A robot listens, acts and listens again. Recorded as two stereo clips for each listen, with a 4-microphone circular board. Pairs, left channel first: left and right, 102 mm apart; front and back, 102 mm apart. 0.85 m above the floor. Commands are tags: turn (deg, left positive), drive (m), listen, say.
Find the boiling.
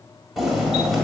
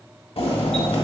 <say>Found it: boiling, straight ahead.</say>